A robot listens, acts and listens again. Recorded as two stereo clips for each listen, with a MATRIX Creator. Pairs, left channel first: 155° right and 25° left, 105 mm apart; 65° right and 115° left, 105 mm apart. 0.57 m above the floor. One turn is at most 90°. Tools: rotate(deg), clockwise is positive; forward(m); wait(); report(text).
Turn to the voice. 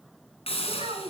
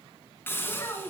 report("Found it: a child speaking, straight ahead.")